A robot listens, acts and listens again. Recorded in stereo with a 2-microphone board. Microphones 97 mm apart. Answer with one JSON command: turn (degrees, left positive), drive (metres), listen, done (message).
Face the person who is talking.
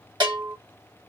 {"listen": true}
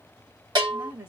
{"turn": -25}
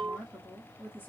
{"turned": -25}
{"turn": 15}
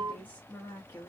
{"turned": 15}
{"turn": 30}
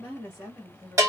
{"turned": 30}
{"turn": 30}
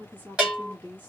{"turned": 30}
{"turn": 15}
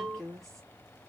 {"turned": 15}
{"done": "Found it: a woman speaking, straight ahead."}